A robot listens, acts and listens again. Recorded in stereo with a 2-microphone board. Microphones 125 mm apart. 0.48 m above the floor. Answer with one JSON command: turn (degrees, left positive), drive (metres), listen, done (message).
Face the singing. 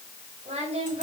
{"turn": -50}
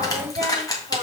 {"turn": -70}
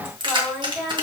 {"done": "Found it: singing, straight ahead."}